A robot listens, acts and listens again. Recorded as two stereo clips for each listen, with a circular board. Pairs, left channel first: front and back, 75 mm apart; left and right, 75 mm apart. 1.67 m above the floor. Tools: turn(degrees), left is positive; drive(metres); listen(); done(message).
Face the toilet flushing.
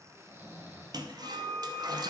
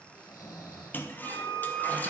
turn(degrees=155)
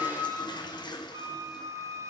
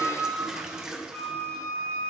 turn(degrees=-10)
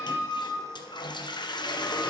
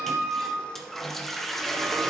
done("Facing the toilet flushing, under 1 m away.")